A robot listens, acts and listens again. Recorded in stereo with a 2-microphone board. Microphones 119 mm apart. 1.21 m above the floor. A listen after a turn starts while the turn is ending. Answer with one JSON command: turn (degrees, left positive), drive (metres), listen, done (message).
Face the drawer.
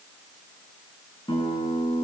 {"listen": true}
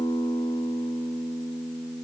{"listen": true}
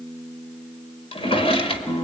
{"turn": 50}
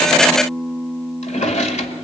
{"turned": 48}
{"turn": 80}
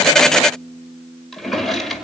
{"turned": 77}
{"done": "Facing the drawer, 2 to 4 m away."}